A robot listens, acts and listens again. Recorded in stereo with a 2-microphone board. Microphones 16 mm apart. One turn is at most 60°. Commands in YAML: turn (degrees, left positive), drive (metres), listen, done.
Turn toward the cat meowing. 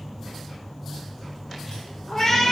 turn: 20
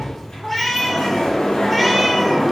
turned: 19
turn: 30
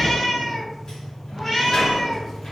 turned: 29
turn: 30
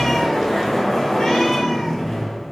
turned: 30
listen: true
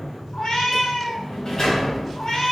turn: 60
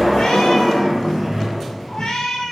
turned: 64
turn: 60
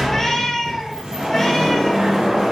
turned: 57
turn: 20
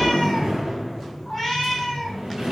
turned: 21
done: "Found it: a cat meowing, straight ahead, 2 to 4 m away."